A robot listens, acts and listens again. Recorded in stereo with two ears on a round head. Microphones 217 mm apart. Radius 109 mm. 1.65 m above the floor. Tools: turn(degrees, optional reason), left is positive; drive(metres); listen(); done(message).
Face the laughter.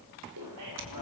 turn(degrees=-90)
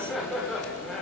done("Found it: laughter, straight ahead, over 4 m away.")